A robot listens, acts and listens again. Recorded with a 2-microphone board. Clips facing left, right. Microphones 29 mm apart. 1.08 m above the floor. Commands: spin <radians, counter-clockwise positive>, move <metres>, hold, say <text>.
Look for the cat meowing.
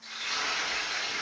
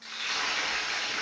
hold
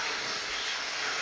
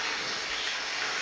hold
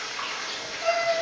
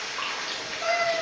spin -0.70
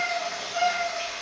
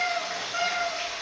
spin -0.70
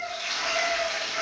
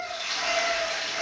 spin -0.35
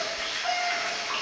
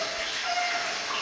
hold
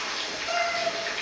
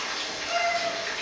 say Facing the cat meowing.